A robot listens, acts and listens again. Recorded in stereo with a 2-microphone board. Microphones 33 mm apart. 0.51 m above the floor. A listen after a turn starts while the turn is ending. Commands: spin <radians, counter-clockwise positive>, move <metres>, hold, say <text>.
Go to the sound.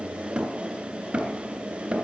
spin -0.52
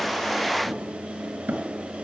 spin -2.09
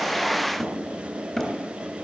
spin 0.17
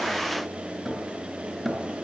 move 1.0
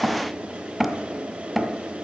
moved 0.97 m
move 1.0
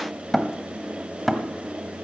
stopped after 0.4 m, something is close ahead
say Arrived at the hammering, straight ahead.